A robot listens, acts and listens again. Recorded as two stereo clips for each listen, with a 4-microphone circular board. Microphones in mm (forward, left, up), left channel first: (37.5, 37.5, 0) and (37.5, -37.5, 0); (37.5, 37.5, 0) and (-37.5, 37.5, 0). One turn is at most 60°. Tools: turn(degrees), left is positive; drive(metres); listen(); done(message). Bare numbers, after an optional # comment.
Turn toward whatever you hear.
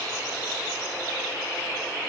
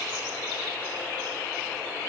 listen()
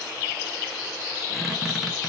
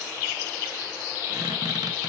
# The squeak: 175° right.
turn(-60)
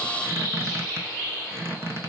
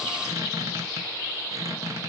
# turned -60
# The squeak is now 140° right.
turn(-60)
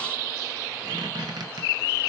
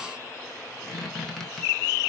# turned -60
# The squeak is now 85° right.
turn(-60)
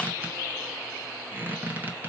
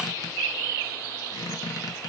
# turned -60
# The squeak is now 25° right.
turn(-25)
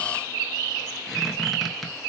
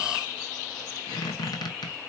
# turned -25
done("Facing the squeak, under 1 m away.")